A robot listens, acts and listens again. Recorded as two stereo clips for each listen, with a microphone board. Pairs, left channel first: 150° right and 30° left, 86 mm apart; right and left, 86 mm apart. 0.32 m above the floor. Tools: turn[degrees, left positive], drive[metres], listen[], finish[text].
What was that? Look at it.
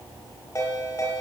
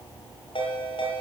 Thought: The ringtone: 95° right.
Action: turn[-95]
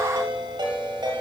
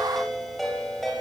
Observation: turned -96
Action: finish[Found it: a ringtone, straight ahead, over 4 m away.]